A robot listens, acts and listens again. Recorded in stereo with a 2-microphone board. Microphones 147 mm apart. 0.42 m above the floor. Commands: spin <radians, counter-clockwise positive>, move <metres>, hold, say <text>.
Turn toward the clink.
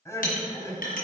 spin 1.31
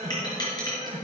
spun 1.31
spin 0.52
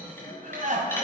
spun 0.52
hold
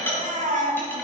spin 0.26
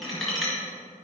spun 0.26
say Facing the clink.